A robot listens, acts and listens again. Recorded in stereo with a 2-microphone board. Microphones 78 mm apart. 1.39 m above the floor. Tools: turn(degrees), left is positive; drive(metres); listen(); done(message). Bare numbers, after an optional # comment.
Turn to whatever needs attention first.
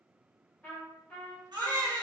# The baby crying: about 70° right or 110° right.
turn(-70)
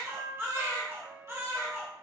# So it is at 35° right.
turn(-35)
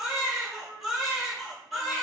done("Found it: a baby crying, straight ahead.")